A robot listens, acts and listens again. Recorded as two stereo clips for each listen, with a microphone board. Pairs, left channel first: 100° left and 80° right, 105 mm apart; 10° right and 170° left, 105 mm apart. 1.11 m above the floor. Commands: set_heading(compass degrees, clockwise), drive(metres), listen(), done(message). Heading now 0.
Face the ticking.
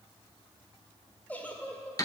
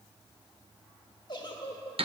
listen()
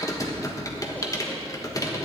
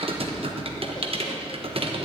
listen()
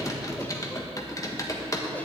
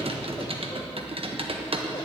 done("I can't make out ticking, only a giggle and typing on a keyboard.")